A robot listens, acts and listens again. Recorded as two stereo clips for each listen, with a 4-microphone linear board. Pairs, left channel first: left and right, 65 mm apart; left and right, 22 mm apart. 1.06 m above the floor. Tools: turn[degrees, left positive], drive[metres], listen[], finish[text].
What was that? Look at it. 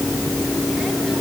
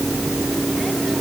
Action: listen[]
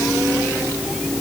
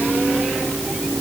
Action: listen[]
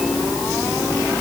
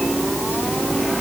Action: finish[I can't make out anything to turn to.]